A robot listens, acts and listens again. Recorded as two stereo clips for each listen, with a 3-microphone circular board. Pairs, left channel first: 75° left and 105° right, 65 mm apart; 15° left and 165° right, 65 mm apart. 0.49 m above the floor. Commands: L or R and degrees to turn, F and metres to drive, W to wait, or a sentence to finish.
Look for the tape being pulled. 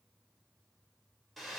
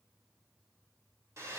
W
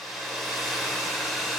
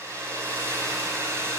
W
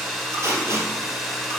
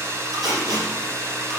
R150
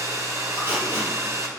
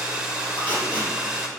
R50
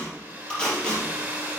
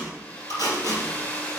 Found it: tape being pulled, straight ahead.